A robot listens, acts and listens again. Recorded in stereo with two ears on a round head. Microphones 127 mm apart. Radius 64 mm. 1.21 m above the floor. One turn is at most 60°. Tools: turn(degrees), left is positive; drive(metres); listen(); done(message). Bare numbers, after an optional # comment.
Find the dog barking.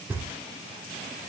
listen()
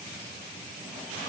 listen()
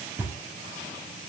done("I can't make out a dog barking, only knocking.")